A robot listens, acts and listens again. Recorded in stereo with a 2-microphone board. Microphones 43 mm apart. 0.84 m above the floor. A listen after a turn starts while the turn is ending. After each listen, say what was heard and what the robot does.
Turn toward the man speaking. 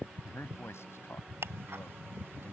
Turn 90° left.
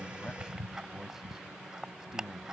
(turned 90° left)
So it is at 15° right. Turn 15° right.
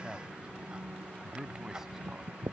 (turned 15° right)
The man speaking is now 10° right. Turn 10° right.
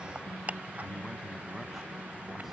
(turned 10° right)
Keep listening.
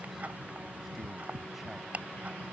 Facing the man speaking.